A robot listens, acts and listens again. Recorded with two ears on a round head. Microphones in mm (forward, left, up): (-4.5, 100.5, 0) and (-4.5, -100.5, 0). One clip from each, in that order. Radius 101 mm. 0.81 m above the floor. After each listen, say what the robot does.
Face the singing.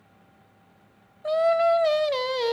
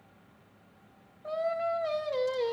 Turn 90° left.
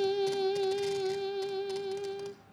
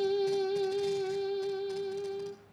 Turn 10° left.
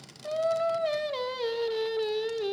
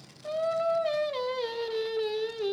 Found it: singing, straight ahead, under 1 m away.